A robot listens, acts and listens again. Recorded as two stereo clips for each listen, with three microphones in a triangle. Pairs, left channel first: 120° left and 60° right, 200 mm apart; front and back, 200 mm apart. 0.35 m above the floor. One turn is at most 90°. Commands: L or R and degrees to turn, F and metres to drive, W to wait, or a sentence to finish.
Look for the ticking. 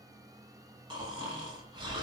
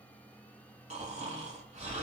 W
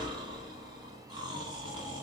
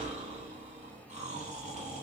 W
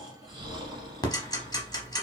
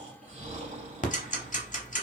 L50
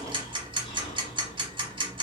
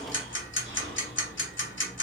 Found it: ticking, straight ahead, under 1 m away.